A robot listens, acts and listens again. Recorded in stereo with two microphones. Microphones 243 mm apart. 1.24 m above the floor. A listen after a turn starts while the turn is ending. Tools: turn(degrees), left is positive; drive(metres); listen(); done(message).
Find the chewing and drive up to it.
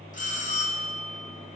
listen()
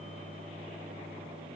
listen()
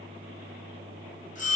done("I can't make out chewing to turn to.")